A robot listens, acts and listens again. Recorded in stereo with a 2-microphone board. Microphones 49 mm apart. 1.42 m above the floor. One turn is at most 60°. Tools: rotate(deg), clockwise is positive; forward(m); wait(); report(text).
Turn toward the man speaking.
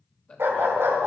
rotate(-30)
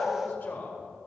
rotate(-60)
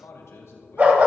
rotate(-60)
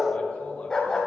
rotate(-20)
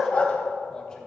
wait()
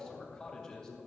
rotate(-10)
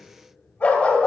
wait()
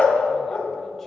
wait()
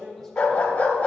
report("Facing the man speaking.")